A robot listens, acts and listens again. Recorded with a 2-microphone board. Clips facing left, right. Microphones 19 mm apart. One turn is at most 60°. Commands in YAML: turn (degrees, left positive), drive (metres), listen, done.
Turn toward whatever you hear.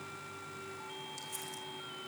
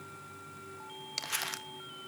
turn: -60
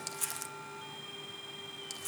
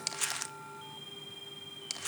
turn: -30
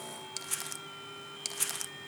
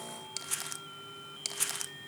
done: "Found it: crumpling, straight ahead."